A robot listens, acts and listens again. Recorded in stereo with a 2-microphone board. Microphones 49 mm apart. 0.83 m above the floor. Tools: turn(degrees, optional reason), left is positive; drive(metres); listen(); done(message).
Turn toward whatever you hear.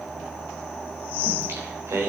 turn(degrees=-65, reason="The singing: about 65° right or 115° right.")
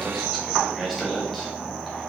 done("Facing the singing, 2 to 4 m away.")